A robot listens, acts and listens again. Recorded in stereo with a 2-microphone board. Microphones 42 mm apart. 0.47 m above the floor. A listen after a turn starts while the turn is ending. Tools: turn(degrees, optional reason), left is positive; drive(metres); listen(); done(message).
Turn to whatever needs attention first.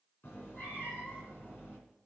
listen()
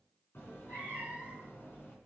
listen()
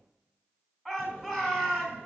turn(degrees=-30)
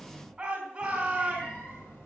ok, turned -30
turn(degrees=-150, reason="So it is at 150° right.")
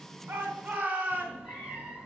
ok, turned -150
turn(degrees=-30, reason="The shout is now 30° right.")
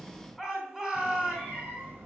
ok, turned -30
done("Facing the shout, 2 to 4 m away.")